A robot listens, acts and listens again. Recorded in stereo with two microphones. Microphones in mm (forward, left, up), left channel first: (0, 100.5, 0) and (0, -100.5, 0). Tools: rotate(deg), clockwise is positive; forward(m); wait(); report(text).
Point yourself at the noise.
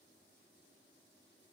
wait()
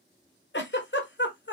rotate(-65)
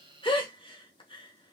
rotate(-30)
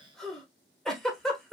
report("Facing the giggle.")